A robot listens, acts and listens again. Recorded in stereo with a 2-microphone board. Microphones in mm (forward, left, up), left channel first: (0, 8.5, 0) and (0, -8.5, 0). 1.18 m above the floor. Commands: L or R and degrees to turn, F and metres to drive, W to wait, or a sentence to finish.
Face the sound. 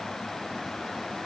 W
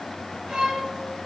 R75
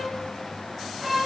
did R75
Found it: a violin, straight ahead.